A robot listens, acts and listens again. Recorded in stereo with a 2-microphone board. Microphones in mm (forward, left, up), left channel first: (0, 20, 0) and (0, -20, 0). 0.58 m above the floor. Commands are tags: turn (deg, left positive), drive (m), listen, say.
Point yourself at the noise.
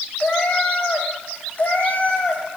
<turn deg="40"/>
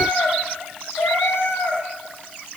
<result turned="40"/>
<turn deg="100"/>
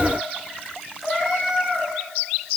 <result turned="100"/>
<say>Facing the cat meowing.</say>